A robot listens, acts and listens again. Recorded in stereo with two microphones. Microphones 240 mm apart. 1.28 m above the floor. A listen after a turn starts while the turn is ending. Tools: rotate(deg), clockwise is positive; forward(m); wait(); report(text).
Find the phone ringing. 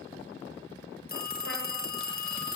rotate(-40)
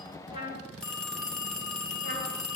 report("Facing the phone ringing, under 1 m away.")